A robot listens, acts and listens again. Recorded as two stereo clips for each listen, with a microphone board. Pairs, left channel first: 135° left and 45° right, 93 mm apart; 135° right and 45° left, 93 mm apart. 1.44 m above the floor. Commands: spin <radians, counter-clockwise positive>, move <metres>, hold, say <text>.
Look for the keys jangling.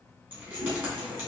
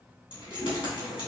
spin -1.92
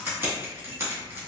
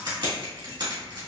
spin 0.35
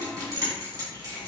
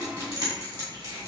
say Facing the keys jangling, 2 to 4 m away.